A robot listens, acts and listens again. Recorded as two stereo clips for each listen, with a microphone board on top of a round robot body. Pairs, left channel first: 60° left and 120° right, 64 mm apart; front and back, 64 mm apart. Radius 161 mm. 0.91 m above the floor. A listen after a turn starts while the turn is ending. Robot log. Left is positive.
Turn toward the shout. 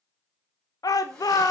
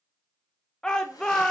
note: The shout: 80° left.
cmd yaw +80
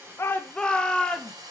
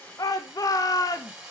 note: The shout is now 15° right.
cmd yaw -15
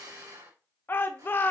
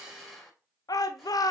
end: Facing the shout, under 1 m away.